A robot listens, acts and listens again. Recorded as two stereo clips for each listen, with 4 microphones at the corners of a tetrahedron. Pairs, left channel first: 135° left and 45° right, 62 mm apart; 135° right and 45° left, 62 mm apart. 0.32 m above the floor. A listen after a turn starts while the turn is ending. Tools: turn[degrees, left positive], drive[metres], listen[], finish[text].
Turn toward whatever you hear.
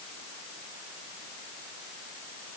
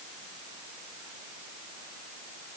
Action: listen[]
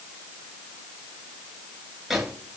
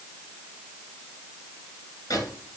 Thought: The microwave: 125° right.
Action: turn[-125]
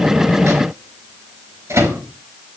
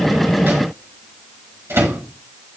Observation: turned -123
Action: finish[Found it: a microwave, straight ahead.]